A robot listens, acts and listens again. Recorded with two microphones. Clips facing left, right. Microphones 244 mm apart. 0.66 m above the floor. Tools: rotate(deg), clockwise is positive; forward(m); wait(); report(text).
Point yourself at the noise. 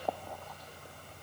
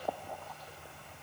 wait()
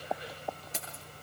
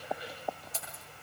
rotate(-70)
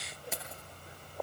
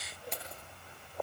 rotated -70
report("Facing the keys jangling.")